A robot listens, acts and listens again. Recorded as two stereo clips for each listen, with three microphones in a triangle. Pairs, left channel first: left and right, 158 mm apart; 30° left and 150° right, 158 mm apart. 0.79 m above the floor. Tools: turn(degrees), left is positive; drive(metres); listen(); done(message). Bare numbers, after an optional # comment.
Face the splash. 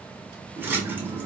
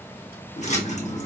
# The splash: 15° right.
turn(-15)
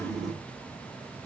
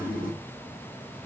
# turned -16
done("Facing the splash.")